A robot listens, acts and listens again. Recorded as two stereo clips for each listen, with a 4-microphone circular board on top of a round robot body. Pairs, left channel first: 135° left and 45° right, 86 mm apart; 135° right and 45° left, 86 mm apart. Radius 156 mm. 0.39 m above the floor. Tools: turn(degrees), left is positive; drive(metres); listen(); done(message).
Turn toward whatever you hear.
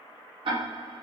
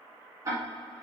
turn(degrees=-10)
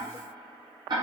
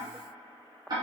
done("Found it: ticking, straight ahead, 1 to 2 m away.")